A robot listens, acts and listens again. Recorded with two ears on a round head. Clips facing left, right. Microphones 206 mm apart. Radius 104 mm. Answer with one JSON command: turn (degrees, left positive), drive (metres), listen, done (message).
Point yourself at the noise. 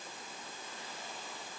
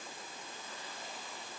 {"listen": true}
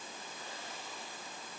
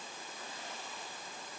{"listen": true}
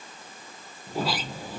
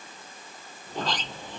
{"turn": 30}
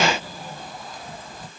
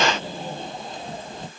{"turn": -25}
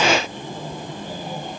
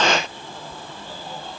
{"turn": 15}
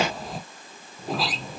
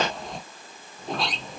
{"done": "Facing the sliding door."}